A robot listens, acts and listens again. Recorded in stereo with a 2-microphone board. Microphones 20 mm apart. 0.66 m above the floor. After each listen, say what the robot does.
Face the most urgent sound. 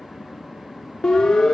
Turn 40° left.
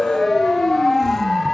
Turn 10° left.
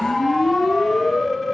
Facing the siren.